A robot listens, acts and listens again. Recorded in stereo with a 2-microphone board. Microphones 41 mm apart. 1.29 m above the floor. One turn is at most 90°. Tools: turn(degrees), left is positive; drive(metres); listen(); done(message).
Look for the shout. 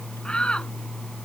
turn(degrees=25)
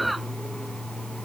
done("Facing the shout.")